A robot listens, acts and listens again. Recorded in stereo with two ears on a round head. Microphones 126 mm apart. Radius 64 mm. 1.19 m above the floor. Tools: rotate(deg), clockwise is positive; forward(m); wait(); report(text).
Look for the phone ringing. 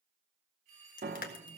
rotate(60)
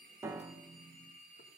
rotate(60)
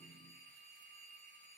rotate(-15)
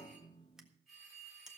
report("Found it: a phone ringing, straight ahead.")